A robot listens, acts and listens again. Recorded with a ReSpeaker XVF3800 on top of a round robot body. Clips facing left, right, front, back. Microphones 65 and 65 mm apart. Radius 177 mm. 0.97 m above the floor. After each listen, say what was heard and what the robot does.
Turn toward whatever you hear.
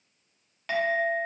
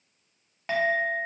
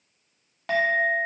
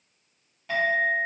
The clink: 20° right. Turn 20° right.
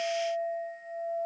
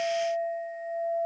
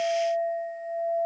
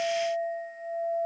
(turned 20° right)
Facing the clink.